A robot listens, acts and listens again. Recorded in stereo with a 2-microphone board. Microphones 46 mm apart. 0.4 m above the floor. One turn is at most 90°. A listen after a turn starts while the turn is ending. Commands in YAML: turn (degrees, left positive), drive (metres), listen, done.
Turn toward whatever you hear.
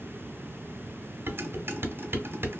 turn: -60
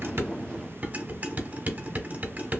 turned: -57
turn: -45
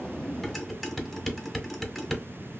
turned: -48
done: "Found it: dishes clattering, straight ahead."